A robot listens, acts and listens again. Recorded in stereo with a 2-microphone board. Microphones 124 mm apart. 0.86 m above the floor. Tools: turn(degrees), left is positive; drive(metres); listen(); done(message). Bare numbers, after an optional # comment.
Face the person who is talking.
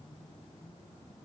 listen()
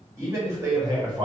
# The man speaking: about 30° right or 150° right.
turn(-30)
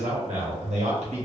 # So it is at 115° right.
turn(-115)
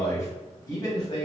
# The man speaking is now 35° left.
turn(35)
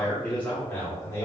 # The man speaking is now 15° left.
turn(15)
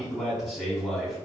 done("Facing the man speaking, 1 to 2 m away.")